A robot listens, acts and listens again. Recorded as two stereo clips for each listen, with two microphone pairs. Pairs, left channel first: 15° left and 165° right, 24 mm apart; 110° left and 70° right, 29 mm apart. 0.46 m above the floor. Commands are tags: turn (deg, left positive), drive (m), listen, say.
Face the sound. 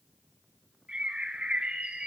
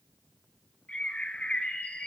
<turn deg="155"/>
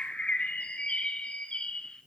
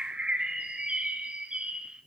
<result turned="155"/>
<turn deg="-20"/>
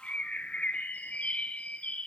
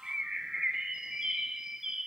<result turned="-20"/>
<say>Facing the bird, under 1 m away.</say>